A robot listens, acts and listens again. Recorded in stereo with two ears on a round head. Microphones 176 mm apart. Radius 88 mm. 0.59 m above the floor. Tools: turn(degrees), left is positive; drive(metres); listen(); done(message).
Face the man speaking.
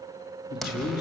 turn(degrees=50)
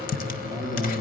turn(degrees=10)
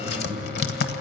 listen()
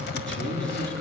done("Found it: a man speaking, straight ahead.")